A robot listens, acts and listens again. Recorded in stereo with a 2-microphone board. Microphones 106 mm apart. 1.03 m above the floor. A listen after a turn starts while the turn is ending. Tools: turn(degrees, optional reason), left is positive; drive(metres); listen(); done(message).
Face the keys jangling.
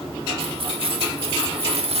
turn(degrees=-70, reason="The keys jangling: about 70° right or 110° right.")
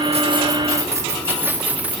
turn(degrees=-10, reason="So it is at 10° right.")
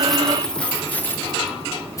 turn(degrees=30, reason="The keys jangling is now 30° left.")
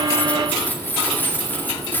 turn(degrees=20, reason="The keys jangling is now 20° left.")
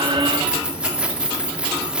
turn(degrees=-10, reason="The keys jangling is now 10° right.")
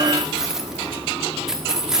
done("Found it: keys jangling, straight ahead.")